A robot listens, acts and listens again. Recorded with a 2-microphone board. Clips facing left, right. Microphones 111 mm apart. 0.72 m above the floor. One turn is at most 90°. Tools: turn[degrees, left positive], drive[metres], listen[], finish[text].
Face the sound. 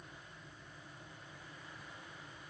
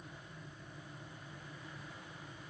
Action: listen[]
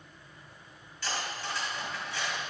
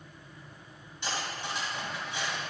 Thought: The cutlery clinking: about 20° right or 160° right.
Action: turn[-20]
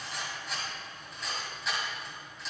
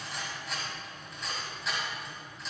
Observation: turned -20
Action: finish[Found it: cutlery clinking, straight ahead, 2 to 4 m away.]